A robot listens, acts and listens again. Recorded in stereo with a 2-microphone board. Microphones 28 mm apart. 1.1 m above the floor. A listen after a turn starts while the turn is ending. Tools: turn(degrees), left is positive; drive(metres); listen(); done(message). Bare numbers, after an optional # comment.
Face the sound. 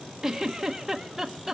turn(-30)
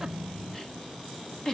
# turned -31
# So it is at 15° left.
turn(15)
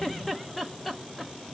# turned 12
done("Found it: a giggle, straight ahead, 1 to 2 m away.")